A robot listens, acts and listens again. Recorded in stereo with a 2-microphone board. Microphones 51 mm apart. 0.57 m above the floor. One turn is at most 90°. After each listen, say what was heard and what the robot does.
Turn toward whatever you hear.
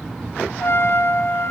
The trumpet: about 60° left or 120° left. Turn 60° left.
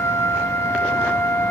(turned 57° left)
So it is at 65° left. Turn 65° left.
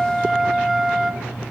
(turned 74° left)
Facing the trumpet, 2 to 4 m away.